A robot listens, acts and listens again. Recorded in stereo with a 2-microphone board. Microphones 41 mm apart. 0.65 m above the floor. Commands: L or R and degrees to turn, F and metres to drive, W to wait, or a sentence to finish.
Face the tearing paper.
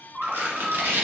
R70
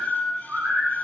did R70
W
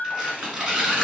R25
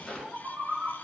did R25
W
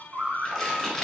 Found it: tearing paper, straight ahead, 1 to 2 m away.